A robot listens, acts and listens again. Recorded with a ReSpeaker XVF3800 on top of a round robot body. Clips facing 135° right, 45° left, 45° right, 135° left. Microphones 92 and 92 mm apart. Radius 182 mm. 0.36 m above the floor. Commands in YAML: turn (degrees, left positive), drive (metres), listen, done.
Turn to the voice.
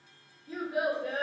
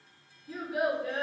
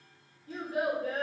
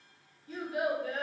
turn: -85
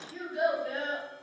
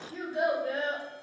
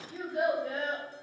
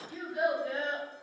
done: "Facing the child speaking, 1 to 2 m away."